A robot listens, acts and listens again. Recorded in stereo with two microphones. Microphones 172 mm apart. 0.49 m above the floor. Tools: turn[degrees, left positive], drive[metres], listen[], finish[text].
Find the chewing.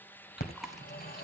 Action: turn[30]
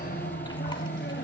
Action: listen[]
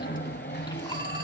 Action: listen[]
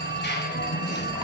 Action: finish[I heard chewing, but can't make it out now. It was about 30° right or 150° left.]